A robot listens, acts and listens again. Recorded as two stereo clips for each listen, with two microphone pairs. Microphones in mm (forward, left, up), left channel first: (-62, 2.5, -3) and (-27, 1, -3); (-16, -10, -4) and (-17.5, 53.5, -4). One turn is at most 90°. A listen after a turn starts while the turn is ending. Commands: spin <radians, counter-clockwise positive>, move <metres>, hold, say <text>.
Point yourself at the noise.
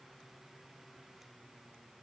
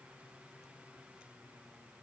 hold
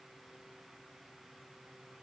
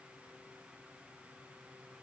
hold
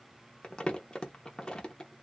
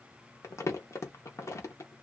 spin -1.57
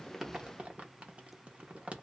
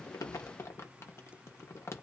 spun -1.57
spin -0.87
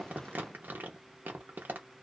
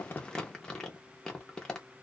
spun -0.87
spin -0.17
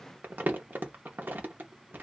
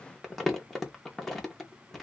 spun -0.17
say Found it: crumpling, straight ahead.